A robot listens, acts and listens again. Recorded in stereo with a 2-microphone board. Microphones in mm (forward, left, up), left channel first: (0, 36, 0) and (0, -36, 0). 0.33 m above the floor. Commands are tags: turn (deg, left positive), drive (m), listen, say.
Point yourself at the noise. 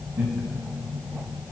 <turn deg="-20"/>
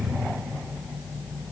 <listen/>
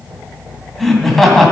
<say>Facing the laughter.</say>